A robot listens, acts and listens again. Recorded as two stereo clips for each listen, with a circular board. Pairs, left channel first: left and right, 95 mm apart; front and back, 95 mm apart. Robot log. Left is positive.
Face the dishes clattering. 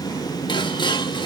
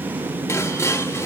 note: The dishes clattering: 60° left.
cmd yaw +60
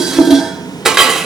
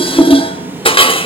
end: Found it: dishes clattering, straight ahead.